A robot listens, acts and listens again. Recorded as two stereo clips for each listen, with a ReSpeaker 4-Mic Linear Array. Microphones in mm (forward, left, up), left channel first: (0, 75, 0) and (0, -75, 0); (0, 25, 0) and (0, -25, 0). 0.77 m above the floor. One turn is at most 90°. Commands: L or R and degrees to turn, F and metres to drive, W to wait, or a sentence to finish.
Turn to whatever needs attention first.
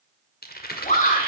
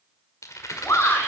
L55
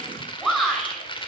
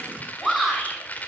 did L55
Facing the shout.